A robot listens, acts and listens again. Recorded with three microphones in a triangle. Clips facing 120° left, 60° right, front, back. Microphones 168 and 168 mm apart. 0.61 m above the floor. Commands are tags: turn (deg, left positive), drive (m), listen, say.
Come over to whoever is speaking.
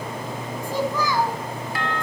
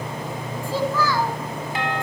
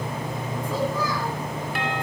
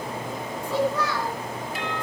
<turn deg="-165"/>
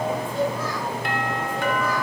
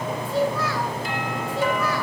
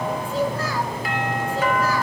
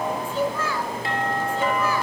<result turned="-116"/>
<turn deg="-55"/>
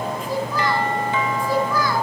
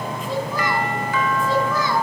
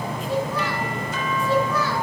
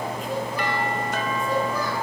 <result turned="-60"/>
<drive m="1.0"/>
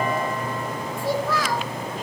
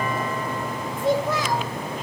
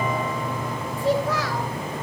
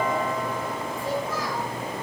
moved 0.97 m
<turn deg="10"/>
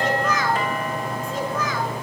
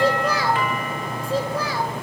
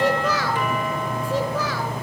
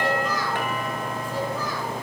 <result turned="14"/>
<drive m="1.0"/>
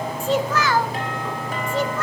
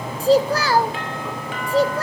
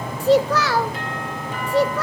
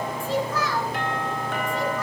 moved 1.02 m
<drive m="1.0"/>
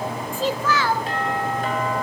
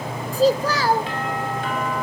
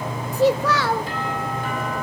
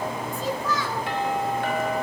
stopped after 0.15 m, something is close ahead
<say>Arrived at the child speaking, straight ahead.</say>